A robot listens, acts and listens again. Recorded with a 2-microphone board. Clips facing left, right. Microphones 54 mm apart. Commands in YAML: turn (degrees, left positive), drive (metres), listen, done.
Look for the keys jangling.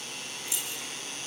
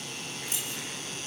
turn: -45
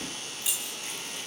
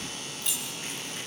done: "Found it: keys jangling, straight ahead, over 4 m away."